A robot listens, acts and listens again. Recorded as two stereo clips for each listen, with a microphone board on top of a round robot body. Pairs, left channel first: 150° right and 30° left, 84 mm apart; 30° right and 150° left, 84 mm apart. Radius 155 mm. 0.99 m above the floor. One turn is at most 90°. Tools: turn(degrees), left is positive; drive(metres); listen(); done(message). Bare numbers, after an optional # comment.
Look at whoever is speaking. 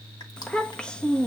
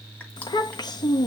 # The child speaking: 70° right.
turn(-70)
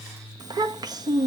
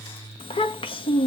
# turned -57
# The child speaking is now 15° right.
turn(-15)
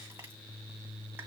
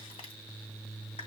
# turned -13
listen()
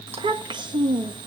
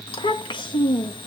done("Facing the child speaking, 1 to 2 m away.")